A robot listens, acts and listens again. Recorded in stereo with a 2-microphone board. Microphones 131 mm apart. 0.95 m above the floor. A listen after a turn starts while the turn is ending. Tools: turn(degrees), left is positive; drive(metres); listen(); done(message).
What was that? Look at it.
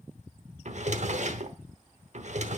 turn(degrees=-60)
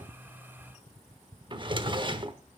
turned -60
turn(degrees=-45)
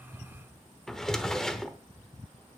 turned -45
done("Found it: a drawer, straight ahead.")